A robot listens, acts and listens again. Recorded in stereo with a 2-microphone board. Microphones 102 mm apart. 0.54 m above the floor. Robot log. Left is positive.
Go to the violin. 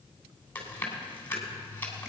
cmd idle
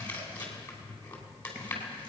cmd idle
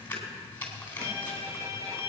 note: The violin: about 30° right or 150° right.
cmd yaw -30
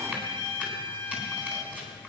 note: So it is at 115° right.
cmd yaw -115
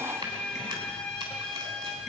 note: The violin is now 10° left.
cmd yaw +10
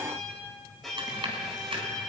cmd fwd 1.0
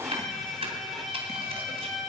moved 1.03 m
cmd fwd 1.0
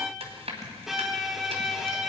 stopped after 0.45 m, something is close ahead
end: Arrived at the violin, straight ahead.